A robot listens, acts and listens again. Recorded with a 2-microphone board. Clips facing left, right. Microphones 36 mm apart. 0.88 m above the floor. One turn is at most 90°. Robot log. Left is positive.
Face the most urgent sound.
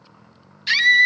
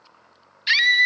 cmd yaw -30
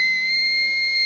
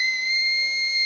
note: So it is at 15° left.
cmd yaw +15
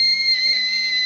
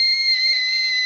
end: Found it: a scream, straight ahead, 1 to 2 m away.